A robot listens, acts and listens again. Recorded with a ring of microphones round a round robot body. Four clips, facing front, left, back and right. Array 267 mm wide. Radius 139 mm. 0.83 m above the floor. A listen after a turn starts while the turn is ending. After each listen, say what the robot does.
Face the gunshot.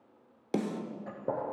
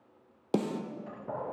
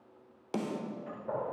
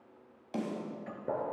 Turn 20° right.
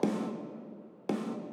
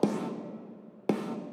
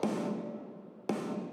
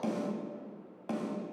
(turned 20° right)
I heard a gunshot from this way, but can't make it out now.